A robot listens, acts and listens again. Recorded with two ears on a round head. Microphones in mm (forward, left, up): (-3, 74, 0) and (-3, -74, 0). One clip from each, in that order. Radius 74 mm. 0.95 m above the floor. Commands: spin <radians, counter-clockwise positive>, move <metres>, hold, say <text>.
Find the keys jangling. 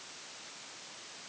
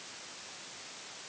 hold
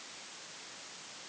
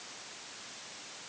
hold
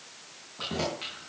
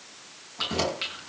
spin -0.87
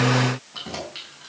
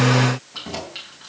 say Facing the keys jangling, over 4 m away.